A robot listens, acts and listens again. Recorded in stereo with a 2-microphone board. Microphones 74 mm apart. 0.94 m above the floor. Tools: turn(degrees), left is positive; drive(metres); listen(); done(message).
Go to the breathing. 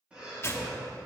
turn(degrees=-30)
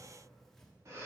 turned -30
turn(degrees=-135)
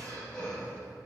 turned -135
turn(degrees=15)
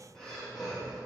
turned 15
drive(metres=1.0)
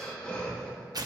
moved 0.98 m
turn(degrees=20)
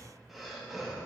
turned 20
drive(metres=1.0)
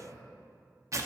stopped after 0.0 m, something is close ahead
listen()
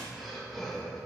done("Arrived at the breathing, straight ahead.")